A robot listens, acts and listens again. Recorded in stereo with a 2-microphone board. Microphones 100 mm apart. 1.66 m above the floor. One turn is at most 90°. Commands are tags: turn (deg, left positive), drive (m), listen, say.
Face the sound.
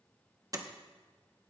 <turn deg="-35"/>
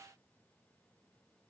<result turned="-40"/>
<listen/>
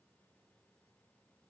<say>I heard a door slam, but can't make it out now. It was about 5° left or 105° right.</say>